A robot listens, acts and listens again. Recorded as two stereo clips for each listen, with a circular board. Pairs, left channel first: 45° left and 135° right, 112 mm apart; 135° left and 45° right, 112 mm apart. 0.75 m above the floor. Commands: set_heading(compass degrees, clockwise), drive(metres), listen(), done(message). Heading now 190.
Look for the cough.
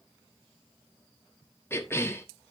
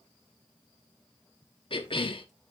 set_heading(80)
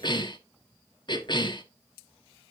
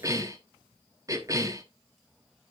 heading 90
set_heading(80)
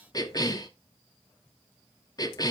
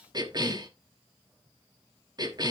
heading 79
done("Found it: a cough, straight ahead.")